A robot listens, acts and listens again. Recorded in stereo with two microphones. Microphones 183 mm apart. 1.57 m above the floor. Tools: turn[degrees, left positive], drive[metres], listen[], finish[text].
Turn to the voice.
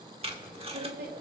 Thought: The woman speaking: about 60° right or 120° right.
Action: turn[-60]
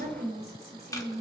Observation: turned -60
Thought: So it is at 60° right.
Action: turn[-60]
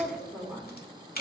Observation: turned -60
Action: finish[Facing the woman speaking, over 4 m away.]